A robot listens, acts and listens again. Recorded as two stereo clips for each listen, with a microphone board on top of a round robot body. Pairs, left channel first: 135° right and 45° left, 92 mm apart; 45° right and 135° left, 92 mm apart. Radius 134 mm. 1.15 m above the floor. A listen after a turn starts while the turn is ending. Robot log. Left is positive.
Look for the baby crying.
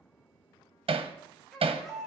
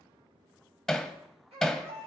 note: The baby crying: 135° left.
cmd yaw +135
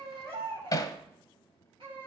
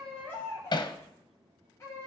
note: The baby crying is now 15° left.
cmd yaw +15
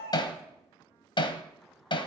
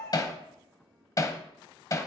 cmd idle
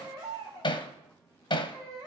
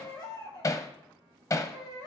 end: Found it: a baby crying, straight ahead.